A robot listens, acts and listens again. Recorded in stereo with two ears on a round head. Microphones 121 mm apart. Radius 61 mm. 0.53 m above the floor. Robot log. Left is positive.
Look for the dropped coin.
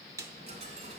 note: The dropped coin: about 55° right or 125° right.
cmd yaw -55
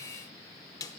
cmd idle
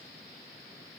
end: I heard a dropped coin, but can't make it out now. It was about straight ahead or 70° right.